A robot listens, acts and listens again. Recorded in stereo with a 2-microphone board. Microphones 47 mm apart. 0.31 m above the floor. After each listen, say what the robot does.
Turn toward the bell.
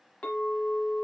Keep listening.
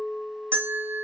Turn 55° right.
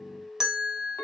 Turn 15° right.
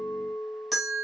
Found it: a bell, straight ahead, 1 to 2 m away.